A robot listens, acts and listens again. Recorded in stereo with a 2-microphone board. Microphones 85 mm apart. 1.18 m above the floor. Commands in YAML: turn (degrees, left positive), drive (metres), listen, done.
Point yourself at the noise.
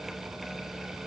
listen: true
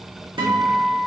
turn: -70
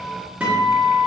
turn: -15
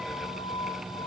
done: "Found it: a guitar, straight ahead."